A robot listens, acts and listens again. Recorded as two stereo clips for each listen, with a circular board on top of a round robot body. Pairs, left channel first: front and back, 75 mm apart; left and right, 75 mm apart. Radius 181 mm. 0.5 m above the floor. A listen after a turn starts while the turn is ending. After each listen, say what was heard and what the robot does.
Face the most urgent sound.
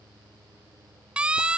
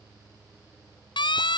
The siren: 100° left. Turn 100° left.
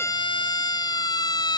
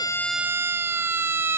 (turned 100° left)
The siren is now 30° right. Turn 30° right.
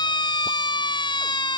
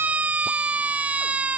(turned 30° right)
The siren is now 20° right. Turn 20° right.
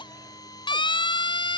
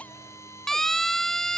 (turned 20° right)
Facing the siren.